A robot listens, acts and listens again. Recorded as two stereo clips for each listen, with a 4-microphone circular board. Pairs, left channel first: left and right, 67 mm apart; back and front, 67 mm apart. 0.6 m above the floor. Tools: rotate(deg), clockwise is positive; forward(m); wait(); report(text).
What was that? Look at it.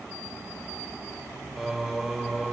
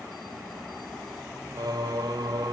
report("Facing the singing.")